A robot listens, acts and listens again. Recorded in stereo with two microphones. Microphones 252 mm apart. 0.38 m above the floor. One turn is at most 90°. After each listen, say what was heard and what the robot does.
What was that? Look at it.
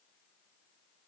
Keep listening.
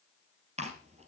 The chewing: about 25° right or 155° right. Turn 25° right.
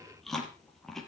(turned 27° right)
Found it: chewing, straight ahead, 2 to 4 m away.